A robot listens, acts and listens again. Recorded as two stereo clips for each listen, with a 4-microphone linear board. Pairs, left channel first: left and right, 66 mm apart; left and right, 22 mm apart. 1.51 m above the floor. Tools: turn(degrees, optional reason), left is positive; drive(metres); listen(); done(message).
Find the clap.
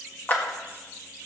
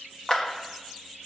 turn(degrees=30, reason="The clap: about 30° left or 150° left.")
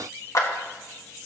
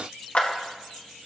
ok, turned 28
turn(degrees=120, reason="So it is at 120° left.")
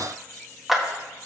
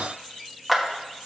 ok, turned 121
done("Facing the clap, 1 to 2 m away.")